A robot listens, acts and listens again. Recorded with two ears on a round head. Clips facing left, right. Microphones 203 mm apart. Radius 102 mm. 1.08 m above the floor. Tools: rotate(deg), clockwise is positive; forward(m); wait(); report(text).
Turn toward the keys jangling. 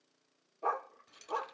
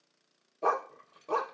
rotate(-60)
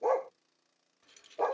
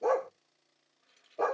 rotate(-55)
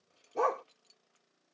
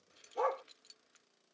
rotate(20)
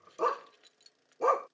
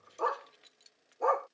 report("Found it: keys jangling, straight ahead.")